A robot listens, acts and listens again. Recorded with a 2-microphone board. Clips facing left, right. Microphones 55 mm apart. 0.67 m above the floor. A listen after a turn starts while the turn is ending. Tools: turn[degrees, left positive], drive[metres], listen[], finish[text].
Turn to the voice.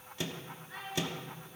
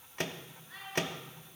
Action: turn[30]
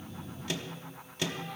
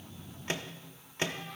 Action: listen[]
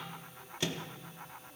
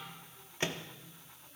Action: listen[]
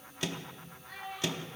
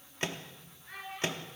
Thought: So it is at 25° right.
Action: turn[-25]
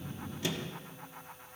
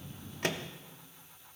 Action: listen[]
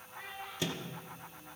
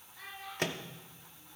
Thought: The child speaking is now 20° left.
Action: turn[20]
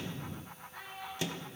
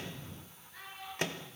Action: finish[Found it: a child speaking, straight ahead, over 4 m away.]